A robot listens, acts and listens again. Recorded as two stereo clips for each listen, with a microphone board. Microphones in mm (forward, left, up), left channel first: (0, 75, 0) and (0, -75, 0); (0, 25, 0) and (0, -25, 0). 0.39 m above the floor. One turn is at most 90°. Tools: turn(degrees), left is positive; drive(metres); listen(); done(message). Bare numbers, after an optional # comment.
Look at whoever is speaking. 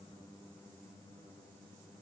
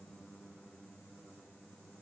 listen()
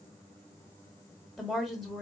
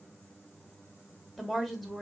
turn(30)
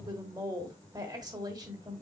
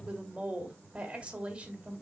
# So it is at 30° right.
turn(-30)
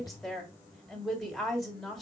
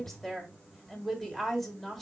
done("Found it: a woman speaking, straight ahead.")